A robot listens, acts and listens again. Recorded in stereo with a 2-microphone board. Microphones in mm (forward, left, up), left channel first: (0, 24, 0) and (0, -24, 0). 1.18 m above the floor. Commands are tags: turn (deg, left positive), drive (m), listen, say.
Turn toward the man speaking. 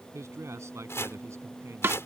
<turn deg="-90"/>
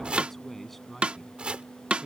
<say>Found it: a man speaking, straight ahead.</say>